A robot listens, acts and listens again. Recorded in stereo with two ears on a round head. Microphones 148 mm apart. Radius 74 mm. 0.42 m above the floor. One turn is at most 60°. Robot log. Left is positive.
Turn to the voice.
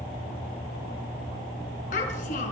note: The child speaking: about 50° left or 130° left.
cmd yaw +50
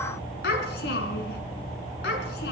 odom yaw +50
note: So it is at 75° left.
cmd yaw +60
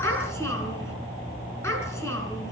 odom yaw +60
note: The child speaking is now 15° left.
cmd yaw +15
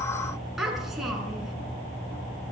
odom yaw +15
end: Facing the child speaking, over 4 m away.